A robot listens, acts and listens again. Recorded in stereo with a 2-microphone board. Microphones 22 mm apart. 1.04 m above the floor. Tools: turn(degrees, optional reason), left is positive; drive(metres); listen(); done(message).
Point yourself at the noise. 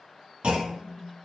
turn(degrees=-60, reason="The clunk: about 60° right or 120° right.")
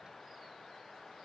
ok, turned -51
listen()
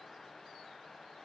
done("I heard a clunk, but can't make it out now. It was about 5° right or 70° right.")